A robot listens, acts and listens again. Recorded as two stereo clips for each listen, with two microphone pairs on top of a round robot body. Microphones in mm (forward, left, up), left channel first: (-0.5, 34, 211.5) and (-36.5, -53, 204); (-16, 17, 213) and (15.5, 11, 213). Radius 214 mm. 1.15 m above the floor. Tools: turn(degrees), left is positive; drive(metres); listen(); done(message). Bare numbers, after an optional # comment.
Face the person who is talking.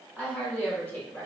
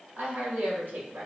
done("Found it: a woman speaking, straight ahead.")